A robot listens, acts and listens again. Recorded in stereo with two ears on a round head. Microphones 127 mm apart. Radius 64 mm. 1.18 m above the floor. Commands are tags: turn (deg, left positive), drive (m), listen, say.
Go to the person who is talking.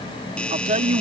<turn deg="-50"/>
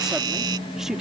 <drive m="1.0"/>
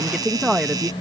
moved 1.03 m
<drive m="1.0"/>
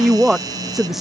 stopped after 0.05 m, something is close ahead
<say>I am next to the woman speaking.</say>